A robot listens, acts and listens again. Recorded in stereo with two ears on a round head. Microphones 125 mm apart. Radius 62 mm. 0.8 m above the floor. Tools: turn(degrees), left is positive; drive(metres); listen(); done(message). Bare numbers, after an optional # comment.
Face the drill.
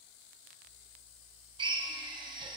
# The drill: about 35° right or 145° right.
turn(-35)
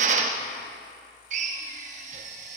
# So it is at 105° right.
turn(-105)
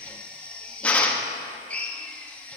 # The drill is now 10° left.
turn(10)
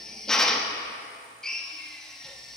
done("Found it: a drill, straight ahead.")